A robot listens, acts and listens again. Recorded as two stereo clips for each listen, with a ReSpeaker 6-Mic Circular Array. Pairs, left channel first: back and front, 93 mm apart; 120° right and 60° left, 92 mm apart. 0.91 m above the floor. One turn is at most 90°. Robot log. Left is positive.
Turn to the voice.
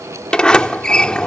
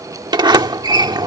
cmd idle
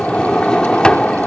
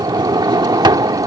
cmd idle
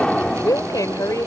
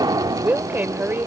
note: The woman speaking: 125° left.
cmd yaw +90
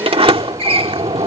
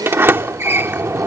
note: Nothing new. It was at 35° left.
cmd yaw +35
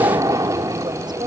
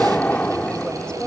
cmd idle
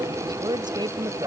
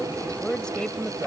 note: The woman speaking is now 40° right.
cmd yaw -40
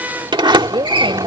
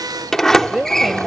note: The woman speaking is now 25° right.
cmd yaw -25
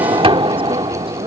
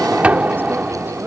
cmd idle
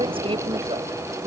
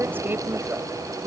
note: The woman speaking is now 10° right.
cmd yaw -10
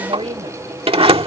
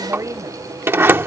end: Found it: a woman speaking, straight ahead.